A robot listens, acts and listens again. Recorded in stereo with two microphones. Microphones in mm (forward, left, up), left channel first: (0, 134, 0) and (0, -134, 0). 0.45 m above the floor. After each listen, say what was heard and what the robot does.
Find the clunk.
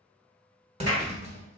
The clunk: about 25° right or 155° right. Turn 25° right.
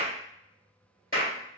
Keep listening.
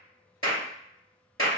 I heard a clunk, but can't make it out now. It was about straight ahead or 130° right.